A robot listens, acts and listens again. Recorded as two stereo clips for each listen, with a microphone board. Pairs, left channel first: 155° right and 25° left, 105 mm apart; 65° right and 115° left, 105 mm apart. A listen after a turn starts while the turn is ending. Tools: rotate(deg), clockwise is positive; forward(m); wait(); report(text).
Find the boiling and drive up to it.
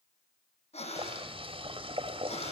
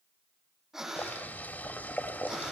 forward(1.0)
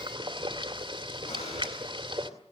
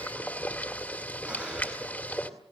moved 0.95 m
forward(1.0)
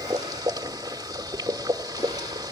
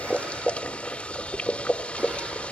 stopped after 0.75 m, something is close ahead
report("I am next to the boiling.")